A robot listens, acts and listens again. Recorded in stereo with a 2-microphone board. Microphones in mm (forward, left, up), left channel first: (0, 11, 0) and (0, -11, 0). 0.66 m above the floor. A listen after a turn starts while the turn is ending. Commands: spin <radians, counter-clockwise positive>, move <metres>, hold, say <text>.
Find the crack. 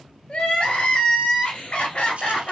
hold
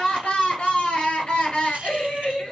hold
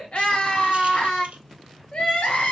say I can't make out a crack, only crying.